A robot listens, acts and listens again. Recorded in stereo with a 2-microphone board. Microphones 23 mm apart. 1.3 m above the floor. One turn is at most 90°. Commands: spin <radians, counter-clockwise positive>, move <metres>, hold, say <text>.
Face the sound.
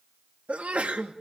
spin -1.57
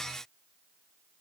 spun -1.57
say Facing where the sneeze came from. I can't hear it now.